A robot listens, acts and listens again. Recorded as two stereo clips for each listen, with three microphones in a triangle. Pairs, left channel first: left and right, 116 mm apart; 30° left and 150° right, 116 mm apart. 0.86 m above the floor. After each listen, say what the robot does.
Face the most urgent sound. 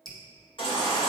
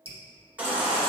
Turn 135° left.
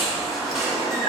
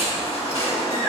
Facing the baby crying.